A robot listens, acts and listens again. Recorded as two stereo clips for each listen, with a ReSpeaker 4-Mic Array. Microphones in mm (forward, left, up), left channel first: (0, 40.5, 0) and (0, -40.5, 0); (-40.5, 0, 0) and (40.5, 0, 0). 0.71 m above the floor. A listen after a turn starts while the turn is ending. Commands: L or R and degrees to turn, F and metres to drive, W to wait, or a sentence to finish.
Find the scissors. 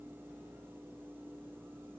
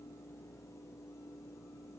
W
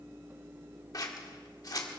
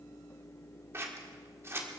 L55
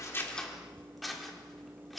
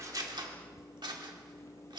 Facing the scissors, 1 to 2 m away.